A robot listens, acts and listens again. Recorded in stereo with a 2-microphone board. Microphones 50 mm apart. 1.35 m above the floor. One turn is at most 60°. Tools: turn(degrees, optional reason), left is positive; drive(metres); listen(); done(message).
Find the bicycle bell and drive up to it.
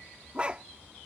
listen()
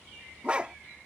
listen()
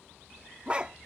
done("I can't make out a bicycle bell to turn to.")